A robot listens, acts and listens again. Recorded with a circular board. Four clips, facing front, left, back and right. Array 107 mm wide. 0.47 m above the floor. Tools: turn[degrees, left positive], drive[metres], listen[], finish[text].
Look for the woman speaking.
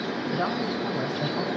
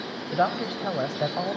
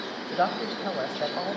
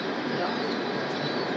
Thought: The woman speaking: 115° left.
Action: turn[115]
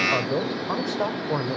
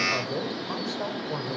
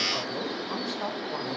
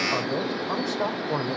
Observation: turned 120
Thought: The woman speaking is now 25° right.
Action: turn[-25]
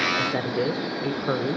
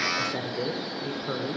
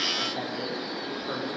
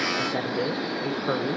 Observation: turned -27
Thought: The woman speaking is now 40° right.
Action: turn[-40]
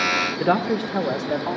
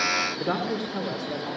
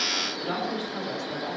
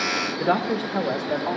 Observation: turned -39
Thought: The woman speaking is now 40° right.
Action: turn[-40]
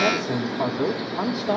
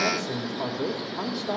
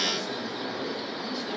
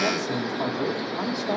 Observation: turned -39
Action: finish[Found it: a woman speaking, straight ahead.]